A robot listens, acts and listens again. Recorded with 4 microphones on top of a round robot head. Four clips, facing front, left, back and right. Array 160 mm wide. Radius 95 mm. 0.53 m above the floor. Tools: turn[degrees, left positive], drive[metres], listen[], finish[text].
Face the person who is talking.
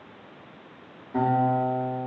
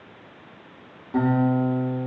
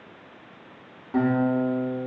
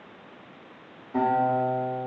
Action: listen[]
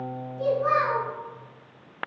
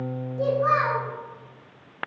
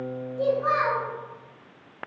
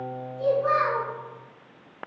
Thought: The child speaking: 120° left.
Action: turn[120]
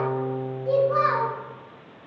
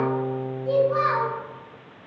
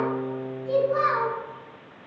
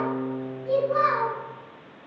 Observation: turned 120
Thought: The child speaking is now 30° left.
Action: turn[30]
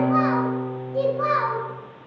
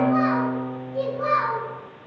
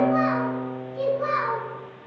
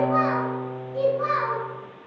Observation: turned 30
Action: finish[Facing the child speaking, under 1 m away.]